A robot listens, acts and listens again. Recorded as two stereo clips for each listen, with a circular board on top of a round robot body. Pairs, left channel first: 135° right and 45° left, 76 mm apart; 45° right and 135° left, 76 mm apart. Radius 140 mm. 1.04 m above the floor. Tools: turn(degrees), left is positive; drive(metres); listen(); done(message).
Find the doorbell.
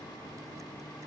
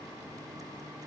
listen()
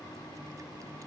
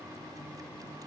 listen()
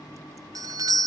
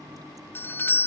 turn(degrees=15)
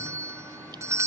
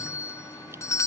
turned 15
done("Found it: a doorbell, straight ahead.")